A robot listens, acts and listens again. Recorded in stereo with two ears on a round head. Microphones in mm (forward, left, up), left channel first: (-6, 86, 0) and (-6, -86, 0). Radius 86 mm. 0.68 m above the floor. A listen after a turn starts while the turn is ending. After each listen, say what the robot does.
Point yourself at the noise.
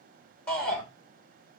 Turn 30° left.
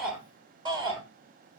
Turn 25° right.
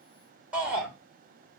Found it: a shout, straight ahead.